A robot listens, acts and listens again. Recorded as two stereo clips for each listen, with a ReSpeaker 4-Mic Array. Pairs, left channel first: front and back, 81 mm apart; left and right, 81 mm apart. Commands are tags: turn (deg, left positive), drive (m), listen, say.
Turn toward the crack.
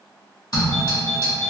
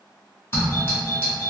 <turn deg="65"/>
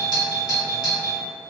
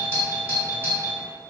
<say>Facing where the crack came from. I can't hear it now.</say>